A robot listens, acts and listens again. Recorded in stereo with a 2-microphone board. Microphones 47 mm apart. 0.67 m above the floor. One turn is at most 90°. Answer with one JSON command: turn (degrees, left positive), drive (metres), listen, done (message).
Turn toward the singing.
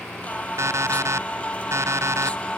{"turn": 25}
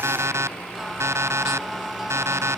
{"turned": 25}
{"done": "Found it: singing, straight ahead."}